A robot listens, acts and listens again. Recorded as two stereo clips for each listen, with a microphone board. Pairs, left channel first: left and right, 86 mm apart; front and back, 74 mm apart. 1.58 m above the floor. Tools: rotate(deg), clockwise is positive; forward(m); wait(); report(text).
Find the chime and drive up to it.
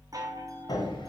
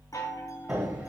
rotate(40)
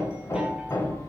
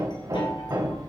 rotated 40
wait()
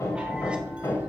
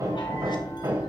wait()
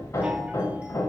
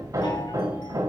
report("I heard a chime from this way, but can't make it out now. I did not reach it.")